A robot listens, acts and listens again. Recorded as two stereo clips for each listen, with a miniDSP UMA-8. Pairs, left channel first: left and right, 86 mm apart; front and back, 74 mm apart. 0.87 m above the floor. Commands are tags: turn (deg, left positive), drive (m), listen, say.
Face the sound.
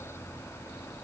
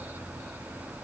<listen/>
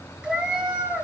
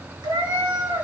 <turn deg="-170"/>
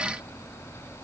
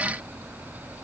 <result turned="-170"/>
<listen/>
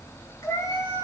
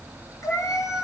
<turn deg="40"/>
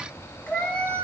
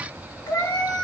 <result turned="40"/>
<turn deg="15"/>
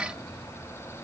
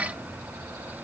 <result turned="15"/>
<listen/>
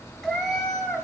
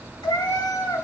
<say>Found it: a cat meowing, straight ahead, 2 to 4 m away.</say>